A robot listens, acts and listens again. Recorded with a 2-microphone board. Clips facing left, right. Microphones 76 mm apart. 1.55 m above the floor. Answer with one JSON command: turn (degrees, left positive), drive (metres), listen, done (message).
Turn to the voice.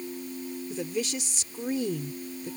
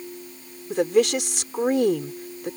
{"turn": -90}
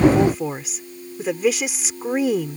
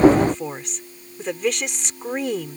{"done": "Found it: a woman speaking, straight ahead."}